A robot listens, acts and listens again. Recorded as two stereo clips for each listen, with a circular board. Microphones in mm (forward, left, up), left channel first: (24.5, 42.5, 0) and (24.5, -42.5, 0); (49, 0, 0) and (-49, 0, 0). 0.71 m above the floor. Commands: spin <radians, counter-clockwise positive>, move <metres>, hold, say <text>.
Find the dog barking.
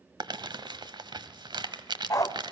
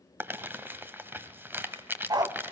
spin 2.36
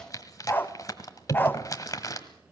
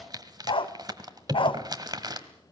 spin 0.44
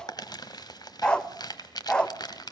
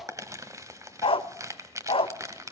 spin 0.17
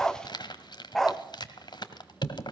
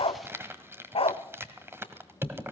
say Facing the dog barking.